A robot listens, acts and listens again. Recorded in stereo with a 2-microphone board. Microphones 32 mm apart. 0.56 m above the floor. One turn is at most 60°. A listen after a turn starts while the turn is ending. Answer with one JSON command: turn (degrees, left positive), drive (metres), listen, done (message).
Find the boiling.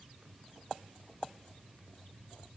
{"listen": true}
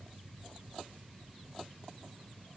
{"listen": true}
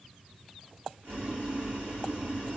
{"turn": -55}
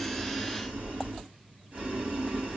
{"turn": -60}
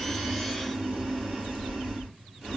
{"turn": -10}
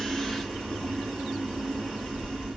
{"done": "Found it: boiling, straight ahead."}